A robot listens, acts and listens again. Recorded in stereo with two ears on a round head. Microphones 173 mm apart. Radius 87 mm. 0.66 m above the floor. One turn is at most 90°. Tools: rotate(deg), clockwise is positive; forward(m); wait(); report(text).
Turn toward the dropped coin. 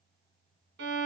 wait()
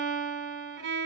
wait()
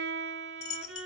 rotate(-35)
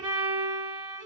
wait()
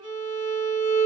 report("I heard a dropped coin, but can't make it out now. It was about straight ahead or 110° left.")